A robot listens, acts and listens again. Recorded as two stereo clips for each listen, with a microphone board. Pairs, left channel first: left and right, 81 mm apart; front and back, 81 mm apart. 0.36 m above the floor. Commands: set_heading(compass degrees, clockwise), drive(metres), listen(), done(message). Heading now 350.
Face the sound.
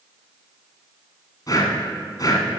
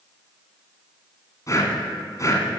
set_heading(305)
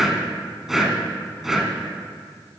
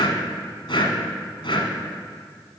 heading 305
done("Found it: breathing, straight ahead, 1 to 2 m away.")